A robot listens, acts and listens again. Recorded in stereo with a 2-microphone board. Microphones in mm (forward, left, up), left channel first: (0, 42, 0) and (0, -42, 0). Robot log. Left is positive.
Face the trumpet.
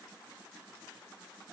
cmd idle
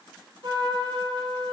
note: The trumpet: about 60° right or 120° right.
cmd yaw -60
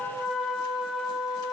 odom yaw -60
end: Found it: a trumpet, straight ahead.